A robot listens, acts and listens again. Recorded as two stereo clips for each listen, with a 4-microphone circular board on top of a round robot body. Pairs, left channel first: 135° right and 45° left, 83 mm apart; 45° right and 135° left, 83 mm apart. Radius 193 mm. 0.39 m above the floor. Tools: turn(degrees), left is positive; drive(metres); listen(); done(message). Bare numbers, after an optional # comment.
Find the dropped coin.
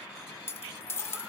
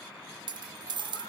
# The dropped coin: 165° left.
turn(165)
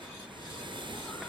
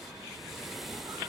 done("Facing where the dropped coin came from. I can't hear it now.")